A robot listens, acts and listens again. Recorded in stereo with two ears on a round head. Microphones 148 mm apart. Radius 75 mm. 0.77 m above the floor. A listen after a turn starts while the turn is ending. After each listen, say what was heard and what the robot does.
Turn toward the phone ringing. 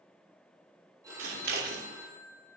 The phone ringing: about 20° right or 160° right. Turn 20° right.
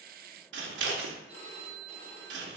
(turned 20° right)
So it is at 140° right. Turn 140° right.
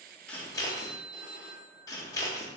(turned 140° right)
The phone ringing is now 30° right. Turn 30° right.
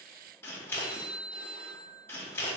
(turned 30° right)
The phone ringing is now 35° right. Turn 35° right.
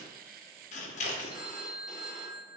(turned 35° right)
Facing the phone ringing.